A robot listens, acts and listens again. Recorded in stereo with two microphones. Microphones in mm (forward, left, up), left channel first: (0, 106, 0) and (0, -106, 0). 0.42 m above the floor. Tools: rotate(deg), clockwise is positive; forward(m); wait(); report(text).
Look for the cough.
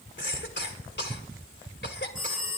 rotate(-55)
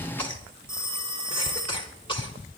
rotate(-30)
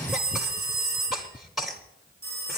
report("Facing the cough, 1 to 2 m away.")